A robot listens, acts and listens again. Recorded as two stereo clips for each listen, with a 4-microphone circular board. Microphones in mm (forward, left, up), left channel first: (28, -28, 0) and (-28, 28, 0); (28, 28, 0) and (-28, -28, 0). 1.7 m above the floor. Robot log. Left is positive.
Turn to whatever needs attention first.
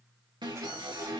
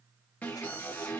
note: The alarm: 115° left.
cmd yaw +115
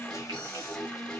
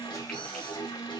note: The alarm is now 40° left.
cmd yaw +40
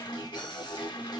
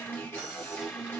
note: The alarm is now 15° right.
cmd yaw -15
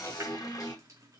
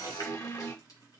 end: Found it: an alarm, straight ahead, 2 to 4 m away.